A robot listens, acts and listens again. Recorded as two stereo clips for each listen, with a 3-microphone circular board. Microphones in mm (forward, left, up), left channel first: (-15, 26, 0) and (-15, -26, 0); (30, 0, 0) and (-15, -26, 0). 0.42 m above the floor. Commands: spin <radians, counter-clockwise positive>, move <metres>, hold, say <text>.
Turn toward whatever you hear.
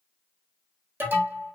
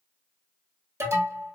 spin -2.36
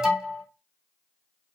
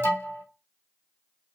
spin -0.17
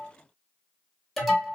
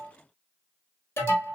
say Facing the alarm, 1 to 2 m away.